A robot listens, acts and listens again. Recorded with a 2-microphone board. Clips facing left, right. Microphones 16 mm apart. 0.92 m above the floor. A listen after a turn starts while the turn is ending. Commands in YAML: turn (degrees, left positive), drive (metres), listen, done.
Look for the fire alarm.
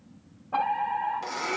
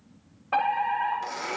turn: -90
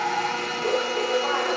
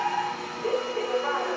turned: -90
turn: -10
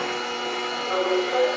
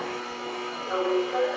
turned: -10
done: "Facing the fire alarm, over 4 m away."